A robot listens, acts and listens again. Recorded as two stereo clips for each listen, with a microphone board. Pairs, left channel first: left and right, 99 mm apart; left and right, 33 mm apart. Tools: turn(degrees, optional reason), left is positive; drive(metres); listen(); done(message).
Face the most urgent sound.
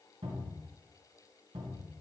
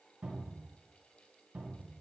listen()
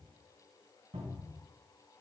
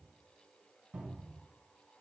listen()
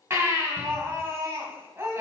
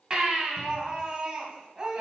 turn(degrees=-25, reason="The baby crying: about 25° right or 155° right.")
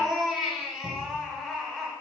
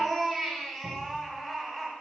done("Found it: a baby crying, straight ahead.")